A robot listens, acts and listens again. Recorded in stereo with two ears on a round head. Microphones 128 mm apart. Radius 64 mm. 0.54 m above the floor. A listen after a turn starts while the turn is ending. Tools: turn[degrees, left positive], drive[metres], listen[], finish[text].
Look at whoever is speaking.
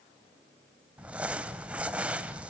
Action: listen[]
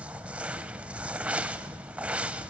Action: listen[]
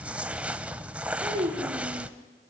Thought: The child speaking: about 35° right or 145° right.
Action: turn[-35]
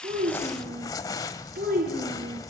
Thought: So it is at 110° right.
Action: turn[-110]
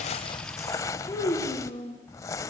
Thought: The child speaking is now 20° left.
Action: turn[20]
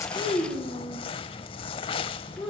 Action: finish[Found it: a child speaking, straight ahead, over 4 m away.]